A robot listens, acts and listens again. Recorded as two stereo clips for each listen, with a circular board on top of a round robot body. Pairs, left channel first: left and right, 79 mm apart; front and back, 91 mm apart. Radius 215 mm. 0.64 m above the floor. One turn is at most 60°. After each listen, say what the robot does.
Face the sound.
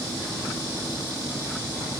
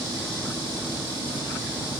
Keep listening.
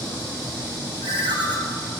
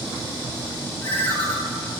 Turn 60° right.
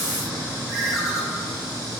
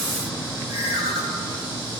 Facing the ringtone, 1 to 2 m away.